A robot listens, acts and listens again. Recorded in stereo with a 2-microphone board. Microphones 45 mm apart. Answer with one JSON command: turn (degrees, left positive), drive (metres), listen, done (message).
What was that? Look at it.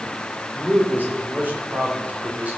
{"turn": -35}
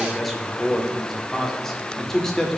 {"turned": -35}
{"turn": 10}
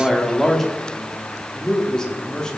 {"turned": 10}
{"turn": 15}
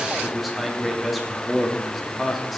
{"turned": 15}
{"done": "Facing the man speaking."}